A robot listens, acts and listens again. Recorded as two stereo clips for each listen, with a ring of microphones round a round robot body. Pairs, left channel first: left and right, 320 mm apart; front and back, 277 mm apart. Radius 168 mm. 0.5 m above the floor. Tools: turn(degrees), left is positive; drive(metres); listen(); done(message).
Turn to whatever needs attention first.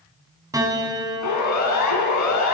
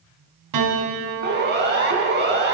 turn(degrees=130)
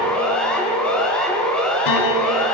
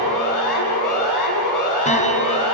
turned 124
done("Found it: a siren, straight ahead, over 4 m away.")